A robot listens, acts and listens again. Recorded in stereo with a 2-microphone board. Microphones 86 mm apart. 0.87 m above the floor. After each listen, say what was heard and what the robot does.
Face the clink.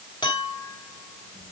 Turn 90° left.
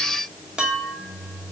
So it is at 10° right. Turn 10° right.
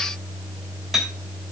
Found it: a clink, straight ahead.